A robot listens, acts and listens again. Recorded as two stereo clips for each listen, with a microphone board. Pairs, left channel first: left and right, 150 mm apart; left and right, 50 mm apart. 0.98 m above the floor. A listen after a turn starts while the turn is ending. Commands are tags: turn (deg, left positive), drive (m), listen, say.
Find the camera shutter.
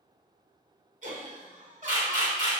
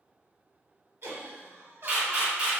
<turn deg="-25"/>
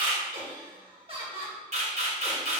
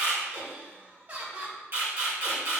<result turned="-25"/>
<turn deg="-125"/>
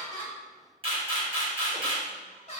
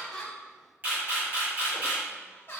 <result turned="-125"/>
<turn deg="-40"/>
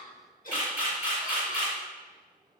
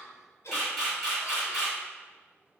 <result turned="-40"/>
<turn deg="-10"/>
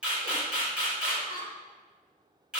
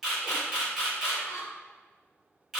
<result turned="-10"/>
<say>Facing the camera shutter, 1 to 2 m away.</say>